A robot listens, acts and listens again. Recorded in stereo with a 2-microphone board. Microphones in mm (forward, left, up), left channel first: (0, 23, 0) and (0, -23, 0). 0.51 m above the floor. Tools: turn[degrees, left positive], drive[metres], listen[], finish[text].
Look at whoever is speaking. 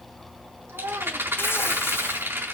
Action: turn[-90]
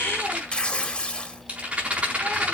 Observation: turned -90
Action: listen[]
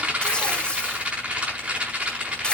Action: listen[]
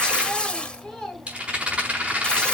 Thought: The child speaking is now 10° left.
Action: turn[10]
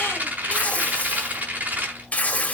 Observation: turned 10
Action: listen[]
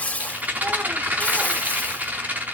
Action: listen[]
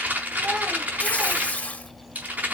Action: finish[Facing where the child speaking came from. I can't hear it now.]